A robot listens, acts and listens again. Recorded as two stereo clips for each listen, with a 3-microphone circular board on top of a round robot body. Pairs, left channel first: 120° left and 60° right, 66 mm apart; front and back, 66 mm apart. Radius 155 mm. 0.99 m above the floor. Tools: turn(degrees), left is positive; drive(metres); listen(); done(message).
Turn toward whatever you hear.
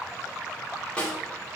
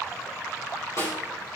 turn(degrees=45)
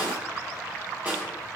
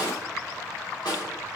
done("Facing the snare drum.")